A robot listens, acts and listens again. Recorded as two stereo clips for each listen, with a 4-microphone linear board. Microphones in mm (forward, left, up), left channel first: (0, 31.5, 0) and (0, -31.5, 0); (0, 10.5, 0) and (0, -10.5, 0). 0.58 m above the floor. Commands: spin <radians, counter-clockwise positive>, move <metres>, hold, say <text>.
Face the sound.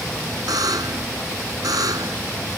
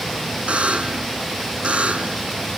spin -1.57
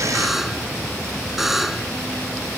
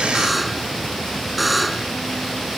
say Facing the buzzer.